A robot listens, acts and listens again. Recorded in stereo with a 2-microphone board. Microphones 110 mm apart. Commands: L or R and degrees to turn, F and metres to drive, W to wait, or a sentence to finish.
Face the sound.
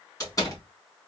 L35
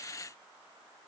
W
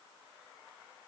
I heard a door slam, but can't make it out now. It was about straight ahead or 110° left.